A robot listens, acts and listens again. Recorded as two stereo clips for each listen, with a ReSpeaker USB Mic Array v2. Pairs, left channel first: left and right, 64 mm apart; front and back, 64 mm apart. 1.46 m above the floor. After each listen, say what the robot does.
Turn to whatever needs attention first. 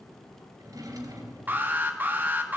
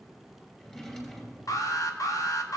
Turn 30° right.
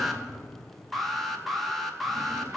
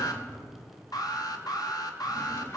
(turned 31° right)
Found it: an alarm, straight ahead, 1 to 2 m away.